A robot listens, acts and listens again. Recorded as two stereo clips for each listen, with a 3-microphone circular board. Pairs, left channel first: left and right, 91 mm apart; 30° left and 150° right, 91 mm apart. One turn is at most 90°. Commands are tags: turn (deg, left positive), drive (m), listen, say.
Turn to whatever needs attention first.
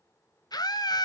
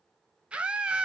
<turn deg="90"/>
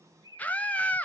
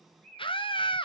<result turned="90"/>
<turn deg="15"/>
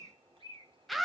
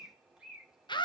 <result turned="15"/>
<say>Found it: a scream, straight ahead.</say>